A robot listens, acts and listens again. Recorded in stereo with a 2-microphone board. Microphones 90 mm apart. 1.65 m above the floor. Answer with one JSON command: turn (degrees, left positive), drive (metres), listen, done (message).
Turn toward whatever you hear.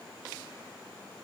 {"listen": true}
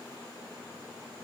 {"listen": true}
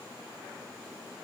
{"done": "I can't make out anything."}